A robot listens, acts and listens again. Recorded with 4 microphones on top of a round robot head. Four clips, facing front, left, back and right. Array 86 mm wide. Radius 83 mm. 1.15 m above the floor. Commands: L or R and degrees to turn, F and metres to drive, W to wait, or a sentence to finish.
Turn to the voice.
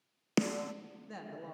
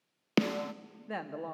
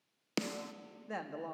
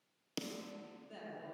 L110
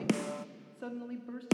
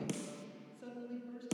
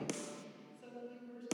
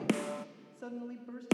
R35
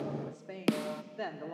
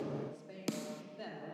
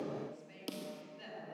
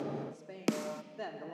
R25
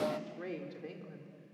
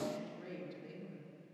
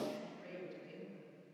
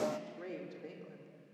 R25
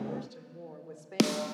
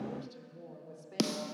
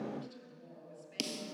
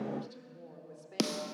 Facing the woman speaking, 2 to 4 m away.